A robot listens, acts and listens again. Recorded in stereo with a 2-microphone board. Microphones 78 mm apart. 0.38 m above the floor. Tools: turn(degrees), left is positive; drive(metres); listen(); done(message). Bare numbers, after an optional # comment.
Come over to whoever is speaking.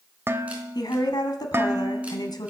# The woman speaking: about 65° left or 115° left.
turn(65)
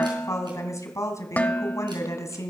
# So it is at 45° left.
turn(45)
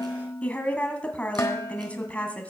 # The woman speaking is now 20° left.
turn(20)
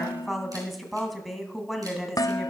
drive(1.0)
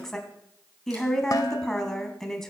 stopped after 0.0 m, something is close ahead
done("Something is in my way. I am facing the woman speaking but have not reached it.")